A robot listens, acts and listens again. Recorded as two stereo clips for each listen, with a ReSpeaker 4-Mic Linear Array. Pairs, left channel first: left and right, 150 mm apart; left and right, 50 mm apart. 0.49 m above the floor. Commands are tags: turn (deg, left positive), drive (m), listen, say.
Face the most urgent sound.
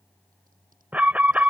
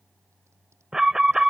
<turn deg="-30"/>
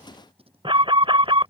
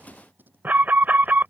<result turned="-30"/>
<turn deg="-140"/>
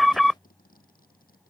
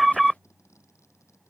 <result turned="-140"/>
<say>Facing the alarm.</say>